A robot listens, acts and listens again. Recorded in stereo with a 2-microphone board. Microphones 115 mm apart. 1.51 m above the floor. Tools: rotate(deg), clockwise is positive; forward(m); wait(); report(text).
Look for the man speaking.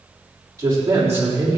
rotate(25)
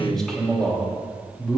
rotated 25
rotate(-10)
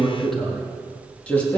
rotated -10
rotate(-15)
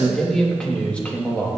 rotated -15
rotate(-15)
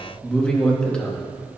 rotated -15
rotate(-10)
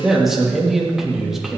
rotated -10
report("Found it: a man speaking, straight ahead, 2 to 4 m away.")